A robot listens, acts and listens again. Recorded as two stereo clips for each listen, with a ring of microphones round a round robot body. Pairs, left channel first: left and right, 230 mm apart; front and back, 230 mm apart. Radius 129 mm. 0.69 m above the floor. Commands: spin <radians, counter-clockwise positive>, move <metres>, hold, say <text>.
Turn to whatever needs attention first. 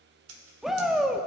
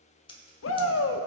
say Facing the shout.